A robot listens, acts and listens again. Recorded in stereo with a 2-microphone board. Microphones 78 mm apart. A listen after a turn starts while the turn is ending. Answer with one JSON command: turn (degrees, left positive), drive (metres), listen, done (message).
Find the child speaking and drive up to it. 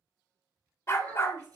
{"turn": -55}
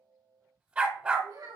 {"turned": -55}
{"turn": -70}
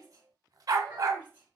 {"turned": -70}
{"turn": -25}
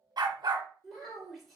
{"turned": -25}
{"drive": 1.0}
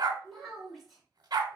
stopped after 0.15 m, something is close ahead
{"done": "Something is in my way. I am facing the child speaking but have not reached it."}